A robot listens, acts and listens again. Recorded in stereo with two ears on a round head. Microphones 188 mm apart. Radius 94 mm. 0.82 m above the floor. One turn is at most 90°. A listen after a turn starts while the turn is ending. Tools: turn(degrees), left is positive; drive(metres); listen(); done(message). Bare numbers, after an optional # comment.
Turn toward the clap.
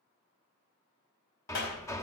# The clap: about 60° left or 120° left.
turn(60)
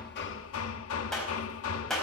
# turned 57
done("Found it: a clap, straight ahead, 2 to 4 m away.")